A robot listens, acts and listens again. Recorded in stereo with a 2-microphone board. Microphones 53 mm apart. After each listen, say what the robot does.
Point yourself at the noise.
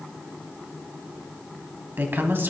Turn 45° right.
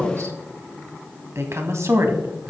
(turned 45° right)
Turn 80° right.
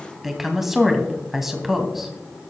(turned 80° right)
Found it: a woman speaking, straight ahead.